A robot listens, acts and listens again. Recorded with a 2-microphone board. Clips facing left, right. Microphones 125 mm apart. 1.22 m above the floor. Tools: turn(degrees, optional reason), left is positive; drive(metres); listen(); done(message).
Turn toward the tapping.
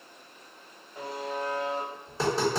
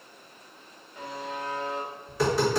turn(degrees=30, reason="The tapping: about 30° left or 150° left.")
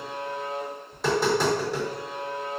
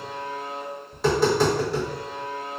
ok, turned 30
done("Facing the tapping, 1 to 2 m away.")